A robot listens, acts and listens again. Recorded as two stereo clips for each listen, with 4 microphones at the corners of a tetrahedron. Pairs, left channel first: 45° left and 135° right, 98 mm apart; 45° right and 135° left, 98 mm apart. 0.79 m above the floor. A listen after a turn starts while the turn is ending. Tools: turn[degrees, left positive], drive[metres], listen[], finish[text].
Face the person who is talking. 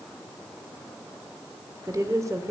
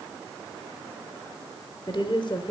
Thought: The woman speaking: 80° right.
Action: turn[-80]
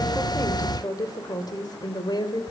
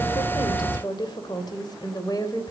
Action: finish[Found it: a woman speaking, straight ahead.]